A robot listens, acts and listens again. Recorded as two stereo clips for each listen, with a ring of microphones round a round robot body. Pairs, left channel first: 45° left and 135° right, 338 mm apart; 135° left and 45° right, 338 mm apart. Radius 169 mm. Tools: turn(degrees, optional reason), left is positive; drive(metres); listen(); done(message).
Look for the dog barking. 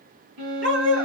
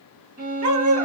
turn(degrees=-80, reason="The dog barking: 80° right.")
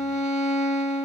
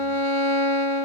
listen()
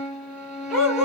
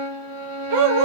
turn(degrees=-45, reason="The dog barking is now 45° right.")
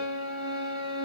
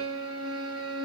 listen()
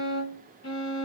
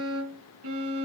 listen()
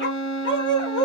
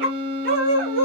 turn(degrees=-15, reason="The dog barking is now 15° right.")
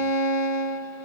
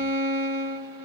listen()
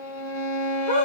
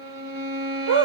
done("Facing the dog barking.")